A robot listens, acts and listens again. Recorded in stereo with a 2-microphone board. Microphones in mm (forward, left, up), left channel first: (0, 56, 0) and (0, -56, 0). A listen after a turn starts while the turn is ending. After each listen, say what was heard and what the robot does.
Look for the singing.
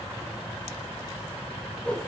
Keep listening.
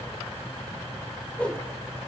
Keep listening.
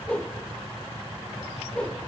I can't make out singing, only a whoosh.